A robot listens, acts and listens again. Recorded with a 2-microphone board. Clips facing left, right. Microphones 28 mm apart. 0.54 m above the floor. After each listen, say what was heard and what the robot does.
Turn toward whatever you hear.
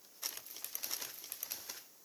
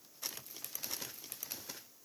Keep listening.
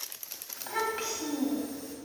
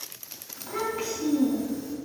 The child speaking: about 35° left or 145° left. Turn 35° left.
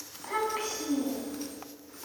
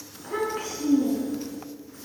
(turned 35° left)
So it is at 120° left. Turn 120° left.
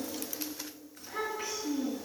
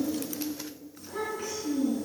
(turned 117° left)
Found it: a child speaking, straight ahead.